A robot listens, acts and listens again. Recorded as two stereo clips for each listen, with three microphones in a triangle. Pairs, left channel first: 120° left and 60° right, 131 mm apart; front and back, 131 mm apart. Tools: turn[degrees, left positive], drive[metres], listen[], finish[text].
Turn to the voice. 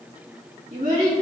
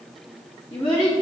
Thought: The child speaking: 50° right.
Action: turn[-50]
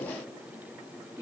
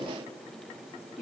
Action: finish[Facing the child speaking, 2 to 4 m away.]